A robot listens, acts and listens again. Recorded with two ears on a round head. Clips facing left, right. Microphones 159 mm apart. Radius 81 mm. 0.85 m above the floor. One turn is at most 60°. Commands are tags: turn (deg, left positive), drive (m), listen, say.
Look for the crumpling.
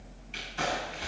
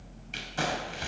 <turn deg="-60"/>
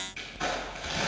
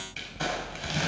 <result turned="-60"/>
<turn deg="-60"/>
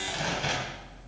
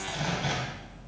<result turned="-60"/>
<turn deg="20"/>
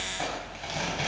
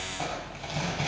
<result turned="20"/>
<turn deg="10"/>
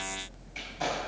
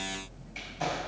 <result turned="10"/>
<listen/>
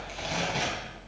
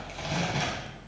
<say>Facing the crumpling, 2 to 4 m away.</say>